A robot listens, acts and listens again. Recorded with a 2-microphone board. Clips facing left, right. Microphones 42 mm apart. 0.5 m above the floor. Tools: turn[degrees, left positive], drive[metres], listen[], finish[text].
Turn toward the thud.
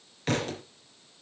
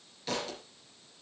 Thought: The thud: about 50° left or 130° left.
Action: turn[50]
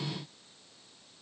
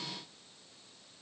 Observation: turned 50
Action: listen[]
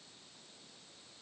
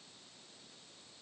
Action: finish[I heard a thud, but can't make it out now. It was about straight ahead or 80° left.]